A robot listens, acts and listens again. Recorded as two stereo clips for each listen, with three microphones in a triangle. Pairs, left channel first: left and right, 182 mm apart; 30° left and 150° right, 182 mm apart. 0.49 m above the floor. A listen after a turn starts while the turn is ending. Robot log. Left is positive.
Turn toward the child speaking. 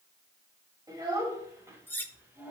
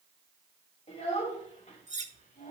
note: The child speaking: 15° right.
cmd yaw -15
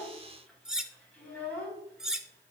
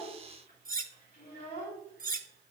note: The child speaking is now 10° left.
cmd yaw +10
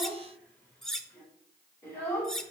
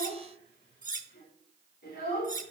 note: The child speaking is now 15° left.
cmd yaw +15
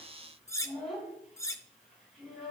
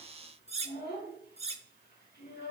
end: Facing the child speaking.